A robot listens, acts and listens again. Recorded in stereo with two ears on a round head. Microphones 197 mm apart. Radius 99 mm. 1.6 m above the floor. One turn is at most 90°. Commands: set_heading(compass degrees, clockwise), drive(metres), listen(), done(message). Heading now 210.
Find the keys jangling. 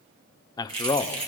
set_heading(235)
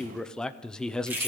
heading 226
set_heading(236)
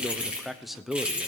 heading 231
done("Facing the keys jangling.")